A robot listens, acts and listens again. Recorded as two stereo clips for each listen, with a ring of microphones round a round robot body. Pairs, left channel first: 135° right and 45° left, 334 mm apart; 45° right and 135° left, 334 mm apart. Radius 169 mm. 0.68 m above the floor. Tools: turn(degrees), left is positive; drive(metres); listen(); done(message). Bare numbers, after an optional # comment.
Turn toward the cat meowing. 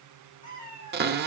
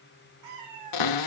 # The cat meowing: 160° left.
turn(160)
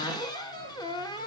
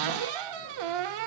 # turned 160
listen()
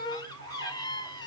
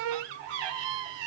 listen()
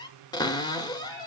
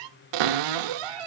done("I heard a cat meowing from this way, but can't make it out now.")